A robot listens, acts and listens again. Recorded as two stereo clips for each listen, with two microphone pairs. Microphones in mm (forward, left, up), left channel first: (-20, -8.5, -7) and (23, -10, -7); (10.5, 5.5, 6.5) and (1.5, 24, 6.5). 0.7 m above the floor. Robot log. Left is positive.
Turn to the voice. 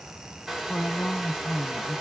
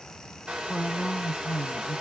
note: The woman speaking: 155° left.
cmd yaw +155
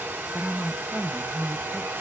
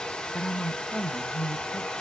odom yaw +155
note: The woman speaking is now 40° left.
cmd yaw +40
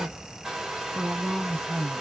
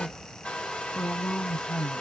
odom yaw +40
end: Found it: a woman speaking, straight ahead, under 1 m away.